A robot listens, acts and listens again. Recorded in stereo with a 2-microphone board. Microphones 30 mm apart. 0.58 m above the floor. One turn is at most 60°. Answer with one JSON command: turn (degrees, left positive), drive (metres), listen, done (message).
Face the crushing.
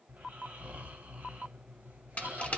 {"turn": 50}
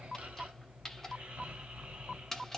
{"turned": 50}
{"turn": 20}
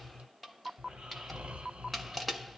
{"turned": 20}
{"done": "Found it: crushing, straight ahead, under 1 m away."}